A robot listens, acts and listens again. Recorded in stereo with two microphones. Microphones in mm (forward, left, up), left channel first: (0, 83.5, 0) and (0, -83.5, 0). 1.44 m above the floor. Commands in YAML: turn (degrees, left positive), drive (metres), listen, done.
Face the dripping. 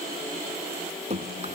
turn: -40
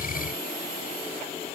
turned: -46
listen: true
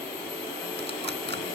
listen: true
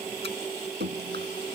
turn: -95
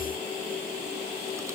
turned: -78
turn: -15
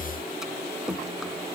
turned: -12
done: "Facing the dripping."